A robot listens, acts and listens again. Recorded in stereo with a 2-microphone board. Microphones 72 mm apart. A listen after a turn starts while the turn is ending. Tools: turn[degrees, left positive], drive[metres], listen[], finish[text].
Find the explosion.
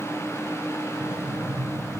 Thought: The explosion: about 35° left or 145° left.
Action: turn[35]
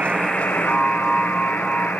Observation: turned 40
Action: listen[]
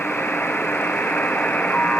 Action: finish[I heard an explosion, but can't make it out now. It was about 5° right or 105° left.]